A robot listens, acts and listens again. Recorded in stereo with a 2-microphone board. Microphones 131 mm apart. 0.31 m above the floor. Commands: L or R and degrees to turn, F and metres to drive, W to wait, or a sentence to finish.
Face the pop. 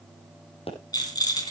L50
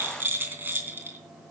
W
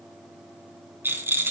I heard a pop, but can't make it out now. It was about straight ahead or 80° left.